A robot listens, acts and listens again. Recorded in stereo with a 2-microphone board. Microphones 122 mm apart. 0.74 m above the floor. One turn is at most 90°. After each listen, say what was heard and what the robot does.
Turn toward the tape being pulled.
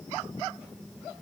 Keep listening.
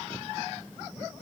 Keep listening.
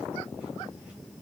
I can't make out tape being pulled to turn to.